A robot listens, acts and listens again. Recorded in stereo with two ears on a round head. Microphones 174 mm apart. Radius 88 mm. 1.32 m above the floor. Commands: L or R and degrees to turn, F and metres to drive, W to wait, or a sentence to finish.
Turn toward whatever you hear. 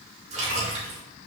R40
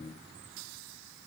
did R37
W
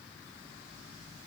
I heard a splash, but can't make it out now. It was about straight ahead or 105° right.